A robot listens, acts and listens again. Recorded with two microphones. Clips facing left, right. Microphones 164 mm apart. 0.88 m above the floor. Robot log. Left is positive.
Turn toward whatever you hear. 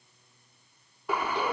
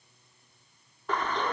cmd yaw +30
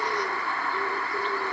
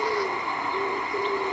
note: So it is at 20° right.
cmd yaw -20
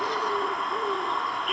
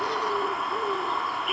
end: Facing the bird.